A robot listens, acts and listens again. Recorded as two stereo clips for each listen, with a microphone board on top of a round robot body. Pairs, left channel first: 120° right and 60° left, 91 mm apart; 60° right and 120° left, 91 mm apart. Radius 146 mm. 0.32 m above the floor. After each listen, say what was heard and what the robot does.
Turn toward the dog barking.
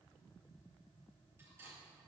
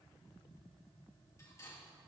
Keep listening.
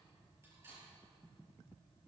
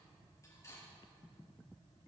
Keep listening.
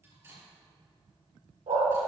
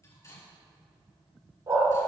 The dog barking: 65° left. Turn 65° left.
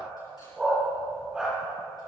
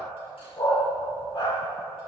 The dog barking is now 20° right. Turn 20° right.
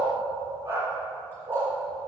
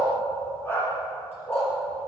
Facing the dog barking.